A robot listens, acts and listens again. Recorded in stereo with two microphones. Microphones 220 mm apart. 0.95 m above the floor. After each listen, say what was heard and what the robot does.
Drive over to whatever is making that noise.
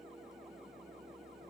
Keep listening.
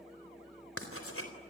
Turn 90° left.
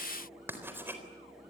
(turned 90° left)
So it is at 10° right. Turn 10° right.
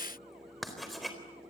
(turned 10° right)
Drive 1.0 m forward.
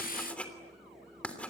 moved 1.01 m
Drive 1.0 m forward.
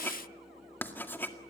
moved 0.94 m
The writing is now 10° left. Turn 10° left.
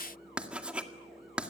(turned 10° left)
Drive 1.0 m forward.
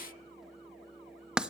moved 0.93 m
Drive 1.0 m forward.
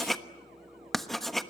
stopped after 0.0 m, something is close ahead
I am next to the writing.